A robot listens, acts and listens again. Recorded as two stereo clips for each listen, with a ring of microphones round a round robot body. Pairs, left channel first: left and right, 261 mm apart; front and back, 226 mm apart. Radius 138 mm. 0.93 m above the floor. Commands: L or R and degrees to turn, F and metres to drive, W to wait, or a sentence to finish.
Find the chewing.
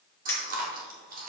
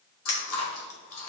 R35
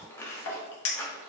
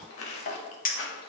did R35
L10
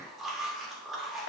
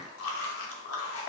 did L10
Facing the chewing.